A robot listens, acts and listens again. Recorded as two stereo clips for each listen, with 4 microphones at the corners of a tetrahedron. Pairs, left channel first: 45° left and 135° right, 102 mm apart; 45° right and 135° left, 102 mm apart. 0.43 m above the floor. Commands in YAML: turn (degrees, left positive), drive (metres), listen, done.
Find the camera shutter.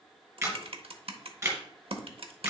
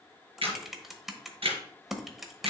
turn: 165
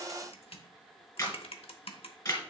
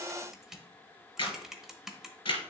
turn: -10
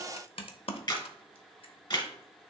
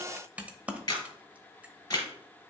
done: "Found it: a camera shutter, straight ahead."